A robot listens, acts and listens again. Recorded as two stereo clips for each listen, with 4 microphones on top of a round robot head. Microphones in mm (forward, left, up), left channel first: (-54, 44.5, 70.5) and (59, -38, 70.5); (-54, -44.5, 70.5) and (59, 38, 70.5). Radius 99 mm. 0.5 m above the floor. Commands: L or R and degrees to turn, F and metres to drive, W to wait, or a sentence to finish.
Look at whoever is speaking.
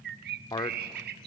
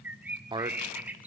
L85
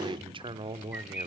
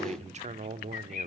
L10
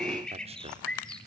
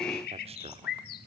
Facing the man speaking.